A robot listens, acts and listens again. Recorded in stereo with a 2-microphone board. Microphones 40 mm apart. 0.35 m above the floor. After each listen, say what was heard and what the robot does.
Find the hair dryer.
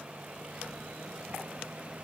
Keep listening.
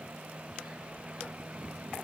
Keep listening.
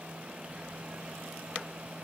I can't make out a hair dryer to turn to.